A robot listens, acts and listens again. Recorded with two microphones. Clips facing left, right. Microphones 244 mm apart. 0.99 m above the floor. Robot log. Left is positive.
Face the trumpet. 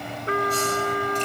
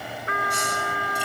note: The trumpet: about 35° left or 145° left.
cmd yaw +35
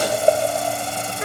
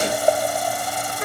end: Facing the trumpet.